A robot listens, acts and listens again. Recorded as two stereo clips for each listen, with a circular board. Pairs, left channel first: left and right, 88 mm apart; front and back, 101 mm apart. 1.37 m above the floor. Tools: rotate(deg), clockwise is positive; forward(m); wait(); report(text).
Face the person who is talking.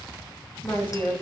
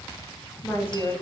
rotate(-65)
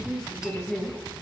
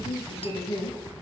report("Found it: a woman speaking, straight ahead, 1 to 2 m away.")